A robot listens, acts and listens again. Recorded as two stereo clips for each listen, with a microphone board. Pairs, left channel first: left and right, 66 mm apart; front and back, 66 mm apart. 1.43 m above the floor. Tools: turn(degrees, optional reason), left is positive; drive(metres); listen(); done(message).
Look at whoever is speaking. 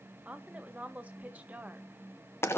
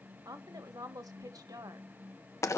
turn(degrees=-155, reason="The woman speaking: 155° right.")
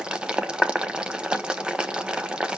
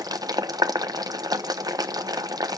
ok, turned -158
listen()
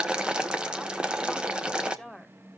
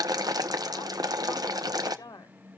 done("Found it: a woman speaking, straight ahead.")